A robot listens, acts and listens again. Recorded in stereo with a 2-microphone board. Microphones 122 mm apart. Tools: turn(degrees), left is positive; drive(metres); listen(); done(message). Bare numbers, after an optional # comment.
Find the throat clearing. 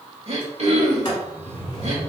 # The throat clearing: about 65° right or 115° right.
turn(-65)
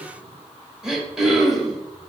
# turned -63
done("Found it: throat clearing, straight ahead, under 1 m away.")